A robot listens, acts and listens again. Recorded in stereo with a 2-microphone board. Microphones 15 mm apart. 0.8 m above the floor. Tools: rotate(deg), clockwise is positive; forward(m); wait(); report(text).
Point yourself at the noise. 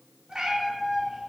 rotate(65)
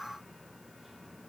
wait()
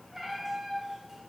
rotate(20)
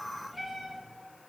report("Found it: a cat meowing, straight ahead.")